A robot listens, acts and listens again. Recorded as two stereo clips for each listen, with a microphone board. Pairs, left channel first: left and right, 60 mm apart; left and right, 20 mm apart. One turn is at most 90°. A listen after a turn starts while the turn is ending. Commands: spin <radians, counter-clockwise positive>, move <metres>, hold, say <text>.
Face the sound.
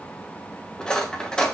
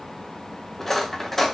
spin 0.26
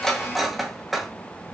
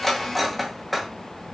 say Found it: cutlery clinking, straight ahead.